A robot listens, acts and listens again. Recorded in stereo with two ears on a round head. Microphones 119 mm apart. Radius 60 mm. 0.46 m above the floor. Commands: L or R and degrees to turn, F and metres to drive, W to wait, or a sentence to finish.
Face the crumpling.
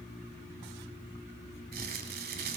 R90
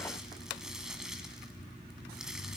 Facing the crumpling, 1 to 2 m away.